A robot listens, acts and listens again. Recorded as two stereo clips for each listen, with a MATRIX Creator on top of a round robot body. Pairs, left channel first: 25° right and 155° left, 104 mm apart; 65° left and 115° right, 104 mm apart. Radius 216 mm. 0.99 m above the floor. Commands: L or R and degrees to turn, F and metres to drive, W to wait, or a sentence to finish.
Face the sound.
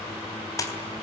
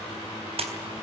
R85
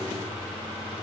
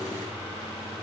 Facing where the splash came from. I can't hear it now.